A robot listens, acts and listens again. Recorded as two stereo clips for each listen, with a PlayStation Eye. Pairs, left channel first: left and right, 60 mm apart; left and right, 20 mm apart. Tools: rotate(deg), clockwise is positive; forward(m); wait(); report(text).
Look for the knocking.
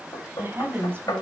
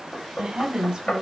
rotate(-90)
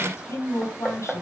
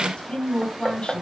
report("Facing the knocking.")